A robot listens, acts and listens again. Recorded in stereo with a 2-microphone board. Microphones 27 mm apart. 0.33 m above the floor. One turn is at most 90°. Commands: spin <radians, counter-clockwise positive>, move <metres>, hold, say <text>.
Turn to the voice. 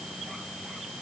hold
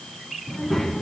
spin 0.52
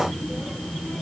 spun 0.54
spin 1.57
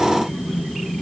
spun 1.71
spin 0.70
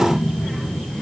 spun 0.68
say Facing the child speaking, over 4 m away.